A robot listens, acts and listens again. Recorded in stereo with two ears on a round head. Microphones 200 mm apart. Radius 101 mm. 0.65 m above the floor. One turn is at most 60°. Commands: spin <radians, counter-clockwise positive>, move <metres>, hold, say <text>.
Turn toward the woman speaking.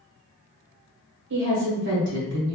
spin -0.96
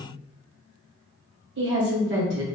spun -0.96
spin -1.05
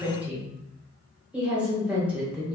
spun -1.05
say Facing the woman speaking.